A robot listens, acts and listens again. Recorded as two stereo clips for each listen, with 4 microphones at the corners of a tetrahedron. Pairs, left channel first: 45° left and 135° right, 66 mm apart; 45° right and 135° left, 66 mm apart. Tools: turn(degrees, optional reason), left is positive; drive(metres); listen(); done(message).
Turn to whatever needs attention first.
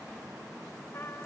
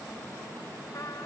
listen()
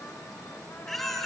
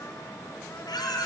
turn(degrees=-40, reason="The baby crying: 40° right.")
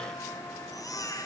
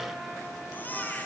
turn(degrees=20, reason="The baby crying is now 20° left.")
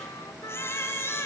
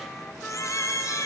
done("Found it: a baby crying, straight ahead, 2 to 4 m away.")